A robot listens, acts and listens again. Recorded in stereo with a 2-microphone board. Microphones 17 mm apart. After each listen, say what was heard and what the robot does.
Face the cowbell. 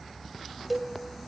Turn 30° left.
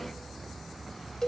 So it is at 140° left. Turn 140° left.
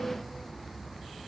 Keep listening.
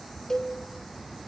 The cowbell is now 20° left. Turn 20° left.
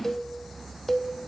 Facing the cowbell.